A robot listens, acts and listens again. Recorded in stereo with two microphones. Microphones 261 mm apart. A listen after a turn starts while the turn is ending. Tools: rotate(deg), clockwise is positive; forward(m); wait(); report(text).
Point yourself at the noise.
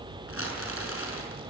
rotate(-55)
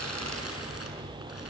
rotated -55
wait()
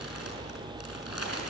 rotate(-65)
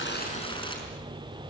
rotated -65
rotate(-20)
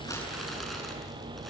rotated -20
wait()
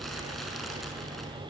wait()
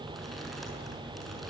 report("Facing where the crumpling came from. I can't hear it now.")